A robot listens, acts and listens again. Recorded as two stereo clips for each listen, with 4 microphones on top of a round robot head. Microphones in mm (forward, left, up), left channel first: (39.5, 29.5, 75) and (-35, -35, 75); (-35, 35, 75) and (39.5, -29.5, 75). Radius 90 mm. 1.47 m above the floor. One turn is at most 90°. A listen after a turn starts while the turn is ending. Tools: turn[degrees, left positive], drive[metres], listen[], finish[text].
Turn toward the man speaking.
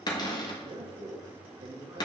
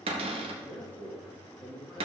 Thought: The man speaking: 90° right.
Action: turn[-90]
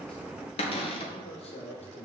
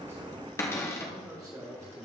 Thought: The man speaking is now 25° left.
Action: turn[25]
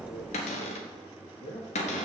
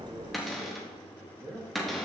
Thought: The man speaking is now 20° left.
Action: turn[20]
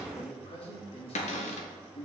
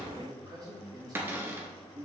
Thought: The man speaking is now 15° left.
Action: turn[15]
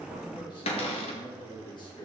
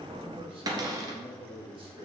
Action: finish[Facing the man speaking, 2 to 4 m away.]